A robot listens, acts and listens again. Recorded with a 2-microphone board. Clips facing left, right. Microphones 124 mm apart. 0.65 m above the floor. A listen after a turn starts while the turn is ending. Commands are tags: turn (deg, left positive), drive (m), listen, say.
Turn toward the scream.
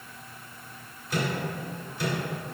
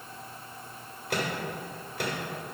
<listen/>
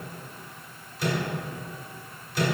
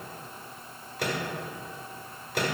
<listen/>
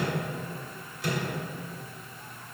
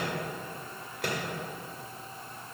<say>I can't make out a scream to turn to.</say>